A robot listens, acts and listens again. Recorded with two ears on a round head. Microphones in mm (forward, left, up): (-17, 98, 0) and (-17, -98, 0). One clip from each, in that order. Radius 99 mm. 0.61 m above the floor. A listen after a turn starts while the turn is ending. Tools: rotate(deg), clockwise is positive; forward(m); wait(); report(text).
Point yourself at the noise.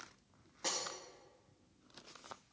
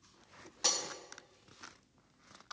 rotate(70)
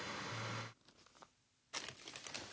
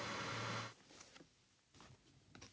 wait()
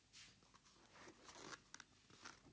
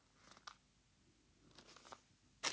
report("I heard breaking glass, but can't make it out now. It was about straight ahead or 40° right.")